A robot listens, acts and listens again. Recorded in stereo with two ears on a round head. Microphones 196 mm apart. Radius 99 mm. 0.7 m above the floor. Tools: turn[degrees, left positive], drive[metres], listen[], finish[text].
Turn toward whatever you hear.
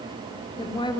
Thought: The woman speaking: about 20° left or 160° left.
Action: turn[20]
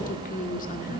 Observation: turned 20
Thought: So it is at 135° left.
Action: turn[135]
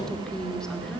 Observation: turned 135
Action: finish[Found it: a woman speaking, straight ahead.]